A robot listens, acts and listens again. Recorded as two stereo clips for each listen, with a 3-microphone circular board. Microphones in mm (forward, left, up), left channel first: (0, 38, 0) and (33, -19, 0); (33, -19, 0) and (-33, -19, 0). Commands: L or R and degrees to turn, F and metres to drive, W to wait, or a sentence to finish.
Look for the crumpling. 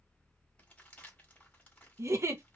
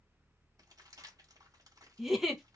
R175
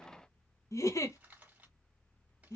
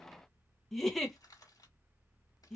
Facing the crumpling.